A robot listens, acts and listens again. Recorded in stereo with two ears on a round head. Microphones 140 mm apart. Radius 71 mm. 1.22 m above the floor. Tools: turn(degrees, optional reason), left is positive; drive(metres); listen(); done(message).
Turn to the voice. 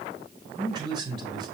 turn(degrees=-30, reason="The man speaking: about 30° right or 150° right.")
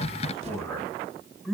done("Found it: a man speaking, straight ahead, over 4 m away.")